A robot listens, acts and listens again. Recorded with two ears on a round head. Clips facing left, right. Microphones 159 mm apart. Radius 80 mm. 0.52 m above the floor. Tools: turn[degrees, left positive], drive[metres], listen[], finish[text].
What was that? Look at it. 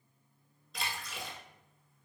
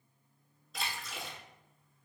Action: turn[30]
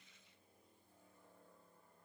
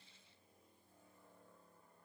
Action: listen[]
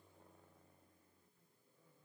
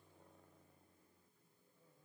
Action: finish[I heard a splash, but can't make it out now. It was about 30° right or 150° left.]